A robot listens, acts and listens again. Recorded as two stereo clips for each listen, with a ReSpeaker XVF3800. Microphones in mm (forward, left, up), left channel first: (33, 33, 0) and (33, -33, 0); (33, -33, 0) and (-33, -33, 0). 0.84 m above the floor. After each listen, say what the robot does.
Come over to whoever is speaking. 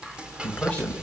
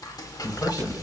Turn 20° left.
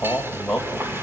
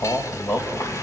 Drive 1.0 m forward.
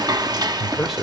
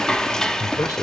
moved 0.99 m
Drive 1.0 m forward.
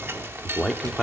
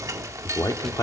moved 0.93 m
Drive 1.0 m forward.
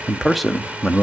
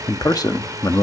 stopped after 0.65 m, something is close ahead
Arrived at the man speaking, straight ahead.